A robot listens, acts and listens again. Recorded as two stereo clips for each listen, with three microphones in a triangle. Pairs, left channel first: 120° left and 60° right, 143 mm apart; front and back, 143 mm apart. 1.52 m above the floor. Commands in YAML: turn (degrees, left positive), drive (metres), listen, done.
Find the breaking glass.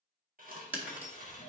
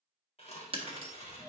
turn: -135
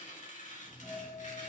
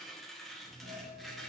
done: "I heard breaking glass from this way, but can't make it out now."